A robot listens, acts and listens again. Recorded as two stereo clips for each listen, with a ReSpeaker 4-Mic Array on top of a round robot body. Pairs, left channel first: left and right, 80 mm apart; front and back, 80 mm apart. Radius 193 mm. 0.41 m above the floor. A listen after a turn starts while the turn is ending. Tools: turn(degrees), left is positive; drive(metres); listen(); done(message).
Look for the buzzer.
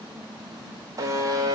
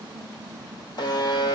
turn(degrees=-40)
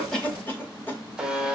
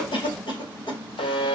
turn(degrees=-10)
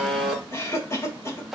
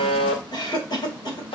done("Facing the buzzer, 1 to 2 m away.")